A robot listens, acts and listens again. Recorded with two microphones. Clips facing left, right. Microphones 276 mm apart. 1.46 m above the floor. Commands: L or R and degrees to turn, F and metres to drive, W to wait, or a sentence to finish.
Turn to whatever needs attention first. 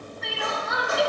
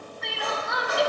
L30
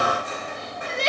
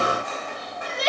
L145
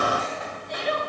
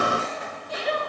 Found it: crying, straight ahead.